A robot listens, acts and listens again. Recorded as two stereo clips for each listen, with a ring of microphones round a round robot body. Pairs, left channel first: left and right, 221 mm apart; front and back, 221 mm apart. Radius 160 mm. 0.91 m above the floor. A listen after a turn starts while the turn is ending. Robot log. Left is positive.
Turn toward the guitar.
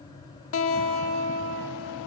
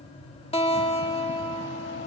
note: The guitar: 65° left.
cmd yaw +65
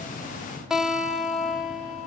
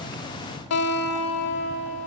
end: Facing the guitar, 1 to 2 m away.